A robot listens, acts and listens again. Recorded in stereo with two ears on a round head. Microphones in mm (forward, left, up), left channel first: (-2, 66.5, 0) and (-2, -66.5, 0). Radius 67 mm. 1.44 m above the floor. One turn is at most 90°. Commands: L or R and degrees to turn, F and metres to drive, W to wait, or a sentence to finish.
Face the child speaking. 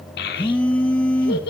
L75
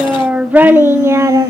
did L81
R25
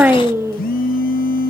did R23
R20
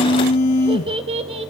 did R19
R40
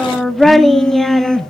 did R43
Facing the child speaking, 1 to 2 m away.